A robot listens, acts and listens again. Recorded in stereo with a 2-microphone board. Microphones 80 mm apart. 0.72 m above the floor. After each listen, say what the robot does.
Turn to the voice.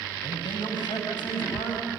Turn 90° left.
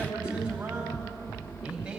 Turn 10° right.
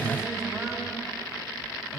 Keep listening.
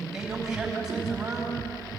Facing the man speaking, over 4 m away.